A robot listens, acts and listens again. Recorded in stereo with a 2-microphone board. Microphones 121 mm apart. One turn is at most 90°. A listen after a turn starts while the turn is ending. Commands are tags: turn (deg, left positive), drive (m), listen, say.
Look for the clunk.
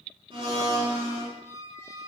<listen/>
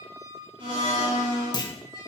<turn deg="35"/>
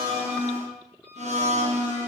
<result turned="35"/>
<listen/>
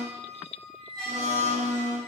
<say>I heard a clunk, but can't make it out now. It was about straight ahead or 110° left.</say>